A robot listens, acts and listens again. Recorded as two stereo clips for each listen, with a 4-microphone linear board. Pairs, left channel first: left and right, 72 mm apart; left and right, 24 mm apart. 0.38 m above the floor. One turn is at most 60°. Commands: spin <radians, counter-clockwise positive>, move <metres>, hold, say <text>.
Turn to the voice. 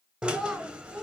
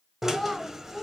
spin 0.52
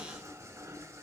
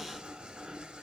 hold
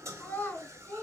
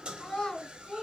spin 1.05
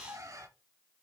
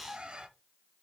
spin 1.05
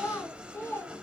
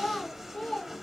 spin 0.61
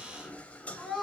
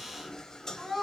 say Facing the child speaking.